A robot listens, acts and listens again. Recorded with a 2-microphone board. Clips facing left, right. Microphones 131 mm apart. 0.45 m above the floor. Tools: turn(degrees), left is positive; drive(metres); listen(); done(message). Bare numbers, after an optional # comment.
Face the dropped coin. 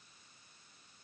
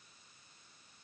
listen()
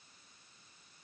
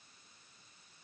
listen()
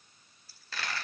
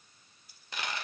# The dropped coin: about 20° right or 160° right.
turn(-20)
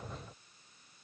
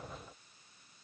listen()
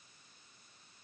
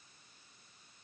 done("I heard a dropped coin, but can't make it out now. It was about straight ahead or 140° right.")